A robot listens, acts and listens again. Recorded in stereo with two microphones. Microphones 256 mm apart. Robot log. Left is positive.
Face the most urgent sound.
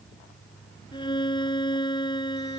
cmd idle
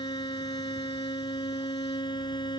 cmd idle
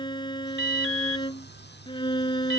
note: The alarm: about 50° right or 130° right.
cmd yaw -50
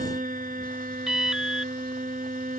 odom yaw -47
end: Found it: an alarm, straight ahead.